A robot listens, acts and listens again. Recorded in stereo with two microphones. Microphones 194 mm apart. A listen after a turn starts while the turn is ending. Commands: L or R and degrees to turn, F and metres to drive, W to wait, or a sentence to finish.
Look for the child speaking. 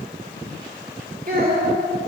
R50
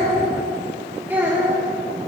R10
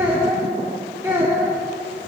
R15
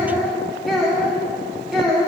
Facing the child speaking.